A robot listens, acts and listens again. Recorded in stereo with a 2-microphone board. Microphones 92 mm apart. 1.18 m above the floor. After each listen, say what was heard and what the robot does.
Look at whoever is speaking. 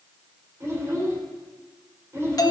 The child speaking: about 30° right or 150° right. Turn 30° right.
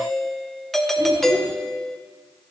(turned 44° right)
Keep listening.
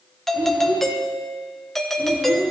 So it is at 110° right. Turn 110° right.
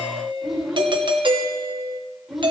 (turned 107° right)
Found it: a child speaking, straight ahead.